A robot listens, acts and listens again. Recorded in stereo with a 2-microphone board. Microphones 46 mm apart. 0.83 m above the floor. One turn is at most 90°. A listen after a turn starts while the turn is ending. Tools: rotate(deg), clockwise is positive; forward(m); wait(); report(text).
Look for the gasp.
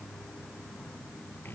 wait()
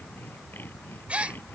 rotate(30)
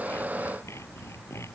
wait()
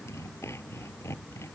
report("I heard a gasp, but can't make it out now. It was about straight ahead or 120° right.")